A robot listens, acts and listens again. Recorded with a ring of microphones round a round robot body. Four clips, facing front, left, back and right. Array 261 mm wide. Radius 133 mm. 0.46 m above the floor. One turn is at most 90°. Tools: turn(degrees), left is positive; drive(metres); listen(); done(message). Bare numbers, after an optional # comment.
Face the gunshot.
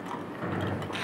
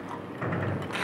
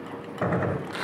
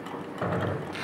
# The gunshot: 160° right.
turn(-90)
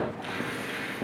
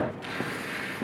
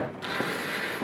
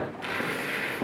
# Nothing new. It was at 70° right.
turn(-70)
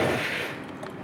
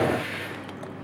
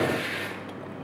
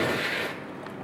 done("Facing where the gunshot came from. I can't hear it now.")